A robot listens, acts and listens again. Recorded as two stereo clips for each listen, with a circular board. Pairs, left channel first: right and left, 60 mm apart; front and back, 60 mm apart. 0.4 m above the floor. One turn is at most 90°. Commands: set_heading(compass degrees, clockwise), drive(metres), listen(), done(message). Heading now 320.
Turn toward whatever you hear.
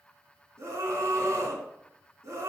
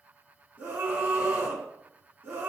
set_heading(230)
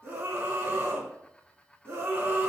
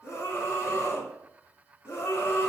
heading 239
set_heading(194)
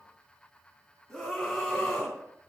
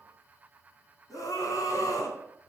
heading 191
done("Found it: a scream, straight ahead.")